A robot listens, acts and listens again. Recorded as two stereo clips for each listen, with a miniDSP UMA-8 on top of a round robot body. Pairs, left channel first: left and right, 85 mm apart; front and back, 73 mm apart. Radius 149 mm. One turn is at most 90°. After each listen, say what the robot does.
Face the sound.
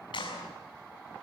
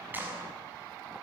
Turn 90° left.
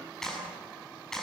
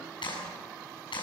Facing the clap, over 4 m away.